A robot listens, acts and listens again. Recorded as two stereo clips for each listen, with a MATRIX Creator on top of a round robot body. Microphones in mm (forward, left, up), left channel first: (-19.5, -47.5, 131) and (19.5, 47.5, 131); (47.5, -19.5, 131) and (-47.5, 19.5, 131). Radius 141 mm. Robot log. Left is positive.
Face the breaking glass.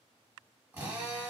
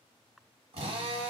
cmd idle
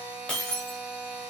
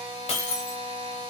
note: The breaking glass: 30° right.
cmd yaw -30
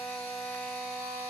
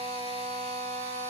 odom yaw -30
end: I heard breaking glass from this way, but can't make it out now.